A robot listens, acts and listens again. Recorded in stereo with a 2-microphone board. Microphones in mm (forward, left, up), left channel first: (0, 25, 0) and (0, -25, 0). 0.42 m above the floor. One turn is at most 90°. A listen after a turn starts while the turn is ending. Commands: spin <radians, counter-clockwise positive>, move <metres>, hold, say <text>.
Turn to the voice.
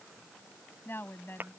spin 0.79
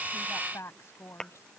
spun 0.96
spin 1.31
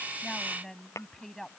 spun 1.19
spin 0.17
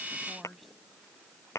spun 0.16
say Found it: a woman speaking, straight ahead.